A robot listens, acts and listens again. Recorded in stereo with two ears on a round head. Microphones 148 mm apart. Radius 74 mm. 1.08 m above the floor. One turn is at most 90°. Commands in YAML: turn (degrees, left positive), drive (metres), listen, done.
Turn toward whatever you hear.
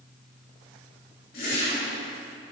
turn: 60
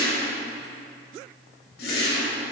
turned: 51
turn: 65
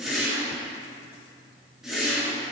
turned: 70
done: "Facing the whoosh, 2 to 4 m away."